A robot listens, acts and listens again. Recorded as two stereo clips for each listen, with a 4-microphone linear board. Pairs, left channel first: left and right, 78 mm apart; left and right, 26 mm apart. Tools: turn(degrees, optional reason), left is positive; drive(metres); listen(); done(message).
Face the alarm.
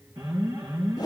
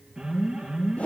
turn(degrees=-65, reason="The alarm: about 65° right or 115° right.")
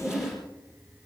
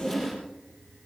listen()
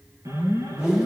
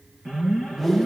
turn(degrees=-45, reason="So it is at 45° right.")
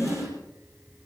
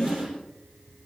done("Facing the alarm.")